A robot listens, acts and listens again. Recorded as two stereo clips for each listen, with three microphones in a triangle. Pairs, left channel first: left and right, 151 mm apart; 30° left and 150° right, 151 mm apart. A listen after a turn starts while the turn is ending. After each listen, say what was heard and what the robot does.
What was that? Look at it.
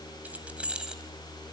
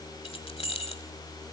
Facing the keys jangling, 1 to 2 m away.